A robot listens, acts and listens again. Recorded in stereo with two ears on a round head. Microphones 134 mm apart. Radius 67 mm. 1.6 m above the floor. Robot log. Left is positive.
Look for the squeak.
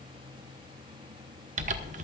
cmd idle
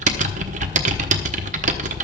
cmd idle
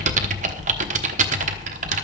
end: I can't make out a squeak to turn to.